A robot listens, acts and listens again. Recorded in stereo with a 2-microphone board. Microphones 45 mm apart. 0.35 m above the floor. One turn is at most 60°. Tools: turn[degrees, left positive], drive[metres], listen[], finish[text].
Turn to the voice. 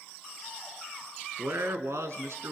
Thought: The man speaking: about 75° right or 105° right.
Action: turn[-60]
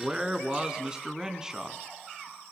Thought: So it is at 15° right.
Action: turn[-15]
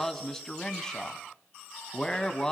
Thought: The man speaking is now 15° left.
Action: turn[15]
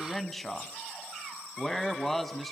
Action: finish[Facing the man speaking.]